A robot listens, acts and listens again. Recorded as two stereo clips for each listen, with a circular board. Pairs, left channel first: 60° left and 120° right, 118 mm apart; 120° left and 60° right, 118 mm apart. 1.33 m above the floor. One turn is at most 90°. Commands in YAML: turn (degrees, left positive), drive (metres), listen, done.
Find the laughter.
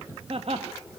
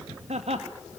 turn: -90
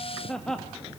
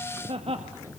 turn: -25
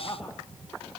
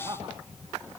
done: "Facing the laughter."